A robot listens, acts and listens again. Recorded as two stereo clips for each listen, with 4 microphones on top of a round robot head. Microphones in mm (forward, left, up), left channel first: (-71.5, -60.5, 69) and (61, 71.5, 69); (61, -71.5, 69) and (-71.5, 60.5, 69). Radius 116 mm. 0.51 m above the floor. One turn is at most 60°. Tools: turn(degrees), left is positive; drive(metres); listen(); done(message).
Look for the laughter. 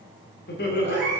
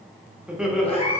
turn(degrees=-60)
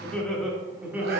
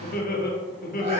turn(degrees=-30)
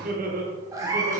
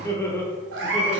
turn(degrees=45)
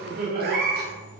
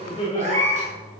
turn(degrees=15)
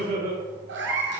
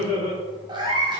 turn(degrees=15)
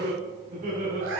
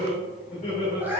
done("Found it: laughter, straight ahead.")